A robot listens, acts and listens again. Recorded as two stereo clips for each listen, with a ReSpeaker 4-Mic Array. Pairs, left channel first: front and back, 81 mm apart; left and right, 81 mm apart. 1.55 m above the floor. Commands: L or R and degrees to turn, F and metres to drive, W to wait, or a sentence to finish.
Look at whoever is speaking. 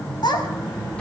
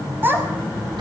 R25
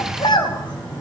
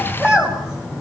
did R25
Facing the child speaking.